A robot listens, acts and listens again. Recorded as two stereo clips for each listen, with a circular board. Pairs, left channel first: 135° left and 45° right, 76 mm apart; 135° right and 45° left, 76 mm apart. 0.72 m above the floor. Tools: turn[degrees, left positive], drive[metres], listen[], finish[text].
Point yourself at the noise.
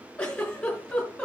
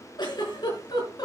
Thought: The giggle: 150° right.
Action: turn[-150]
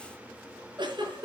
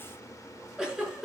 Thought: The giggle is now 35° right.
Action: turn[-35]
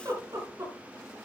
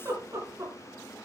Action: finish[Facing the giggle, over 4 m away.]